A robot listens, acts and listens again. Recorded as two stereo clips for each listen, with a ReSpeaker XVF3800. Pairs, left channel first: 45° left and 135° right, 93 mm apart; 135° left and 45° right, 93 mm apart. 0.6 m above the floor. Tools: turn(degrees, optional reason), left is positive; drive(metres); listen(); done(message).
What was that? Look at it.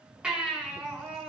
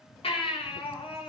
turn(degrees=145, reason="The baby crying: 145° left.")
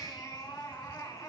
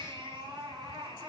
turn(degrees=-10, reason="The baby crying is now 10° right.")
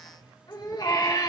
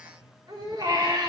done("Found it: a baby crying, straight ahead.")